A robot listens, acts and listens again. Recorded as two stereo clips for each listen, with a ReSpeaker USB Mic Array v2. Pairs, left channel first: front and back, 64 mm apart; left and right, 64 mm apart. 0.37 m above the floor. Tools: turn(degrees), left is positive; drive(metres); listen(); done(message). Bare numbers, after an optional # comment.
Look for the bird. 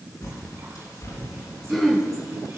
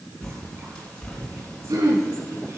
# The bird: 15° left.
turn(15)
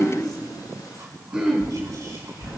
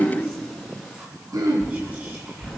done("Facing the bird.")